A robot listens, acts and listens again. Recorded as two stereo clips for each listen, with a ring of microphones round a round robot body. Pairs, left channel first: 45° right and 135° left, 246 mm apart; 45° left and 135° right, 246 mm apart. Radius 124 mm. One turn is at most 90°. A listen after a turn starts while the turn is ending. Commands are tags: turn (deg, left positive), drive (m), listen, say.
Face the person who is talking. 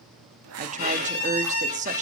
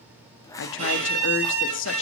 <turn deg="80"/>
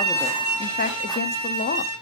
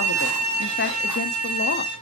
<listen/>
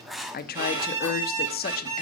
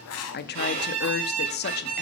<say>Found it: a woman speaking, straight ahead.</say>